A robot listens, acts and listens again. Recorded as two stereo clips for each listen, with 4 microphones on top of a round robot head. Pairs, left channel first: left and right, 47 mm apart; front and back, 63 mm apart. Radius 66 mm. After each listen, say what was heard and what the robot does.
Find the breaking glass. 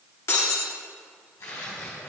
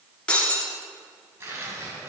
The breaking glass: 70° left. Turn 70° left.
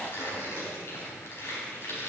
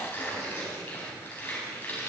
Facing where the breaking glass came from. I can't hear it now.